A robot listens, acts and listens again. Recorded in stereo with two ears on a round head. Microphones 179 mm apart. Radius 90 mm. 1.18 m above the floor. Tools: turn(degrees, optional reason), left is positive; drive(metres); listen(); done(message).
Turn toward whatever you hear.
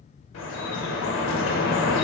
turn(degrees=75, reason="The dripping: about 75° left or 105° left.")
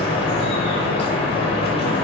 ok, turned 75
turn(degrees=30, reason="So it is at 30° left.")
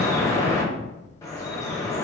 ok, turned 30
turn(degrees=15, reason="The dripping is now 15° left.")
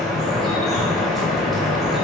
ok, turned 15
done("Facing the dripping, under 1 m away.")